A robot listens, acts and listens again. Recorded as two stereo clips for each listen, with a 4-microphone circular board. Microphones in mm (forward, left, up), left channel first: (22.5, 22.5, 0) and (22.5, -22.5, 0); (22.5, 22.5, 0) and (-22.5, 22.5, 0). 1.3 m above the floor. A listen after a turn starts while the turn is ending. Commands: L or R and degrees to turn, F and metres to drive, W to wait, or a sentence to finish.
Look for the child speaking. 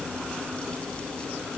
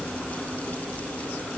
W
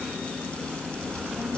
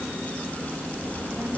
R135
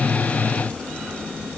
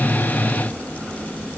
Facing the child speaking.